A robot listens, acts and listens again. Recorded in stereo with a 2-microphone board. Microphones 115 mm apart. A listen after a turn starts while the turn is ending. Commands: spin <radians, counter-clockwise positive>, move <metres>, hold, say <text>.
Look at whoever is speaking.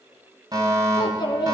spin 0.70
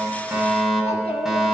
hold
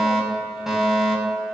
hold
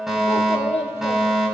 spin 1.66
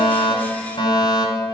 hold
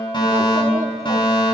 hold
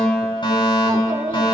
spin -0.52
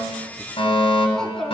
say Found it: a child speaking, straight ahead, 2 to 4 m away.